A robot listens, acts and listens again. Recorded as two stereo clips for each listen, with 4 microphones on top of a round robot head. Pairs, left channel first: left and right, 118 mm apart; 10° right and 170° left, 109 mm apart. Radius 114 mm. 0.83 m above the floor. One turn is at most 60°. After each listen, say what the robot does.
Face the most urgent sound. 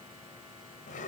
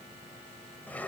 Keep listening.
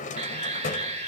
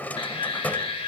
Turn 50° right.
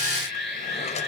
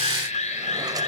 Facing the alarm.